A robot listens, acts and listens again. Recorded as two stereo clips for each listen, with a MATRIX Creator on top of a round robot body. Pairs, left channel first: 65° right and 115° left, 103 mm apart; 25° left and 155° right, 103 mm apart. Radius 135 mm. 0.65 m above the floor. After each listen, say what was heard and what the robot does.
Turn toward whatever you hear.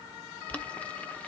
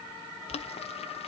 The boiling: 10° left. Turn 10° left.
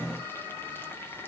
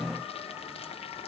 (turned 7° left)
Keep listening.
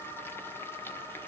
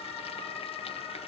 Keep listening.
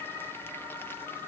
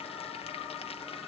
Facing where the boiling came from. I can't hear it now.